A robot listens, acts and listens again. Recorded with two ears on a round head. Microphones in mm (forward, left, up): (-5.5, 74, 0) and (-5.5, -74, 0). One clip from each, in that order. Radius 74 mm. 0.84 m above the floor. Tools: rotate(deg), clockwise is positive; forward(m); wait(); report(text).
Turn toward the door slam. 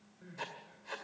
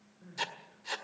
wait()
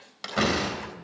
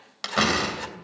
rotate(20)
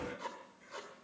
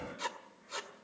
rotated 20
wait()
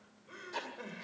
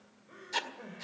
report("I heard a door slam, but can't make it out now. It was about straight ahead or 140° right.")